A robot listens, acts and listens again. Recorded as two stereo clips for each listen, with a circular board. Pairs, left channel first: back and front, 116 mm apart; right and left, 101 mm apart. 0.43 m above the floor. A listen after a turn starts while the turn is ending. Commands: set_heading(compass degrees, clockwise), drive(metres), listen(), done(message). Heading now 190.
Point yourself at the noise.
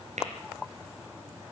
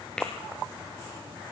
set_heading(200)
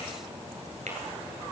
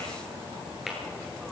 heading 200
done("Facing the tapping.")